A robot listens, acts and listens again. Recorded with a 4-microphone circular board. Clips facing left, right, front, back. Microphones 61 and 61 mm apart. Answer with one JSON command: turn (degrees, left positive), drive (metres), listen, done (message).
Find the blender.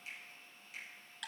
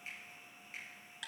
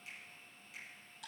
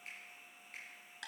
{"listen": true}
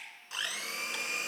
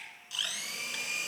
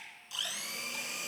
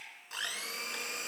{"turn": 140}
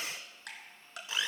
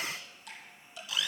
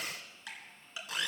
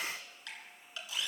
{"turn": 30}
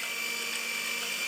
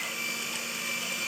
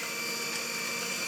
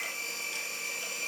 {"done": "Facing the blender."}